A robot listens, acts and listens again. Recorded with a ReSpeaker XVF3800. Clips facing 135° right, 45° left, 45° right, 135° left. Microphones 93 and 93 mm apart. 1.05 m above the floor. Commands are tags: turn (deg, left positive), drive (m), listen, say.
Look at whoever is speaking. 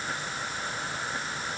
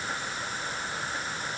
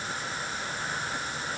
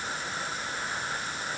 <listen/>
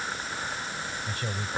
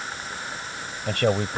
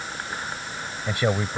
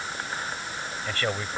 <turn deg="30"/>
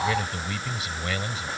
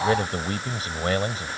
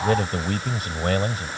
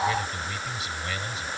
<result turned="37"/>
<say>Found it: a man speaking, straight ahead.</say>